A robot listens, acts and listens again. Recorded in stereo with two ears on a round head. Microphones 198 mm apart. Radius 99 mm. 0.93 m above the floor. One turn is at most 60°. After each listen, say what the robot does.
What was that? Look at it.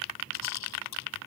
Turn 60° left.
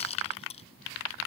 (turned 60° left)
Turn 30° left.
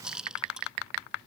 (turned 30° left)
Found it: a rattle, straight ahead.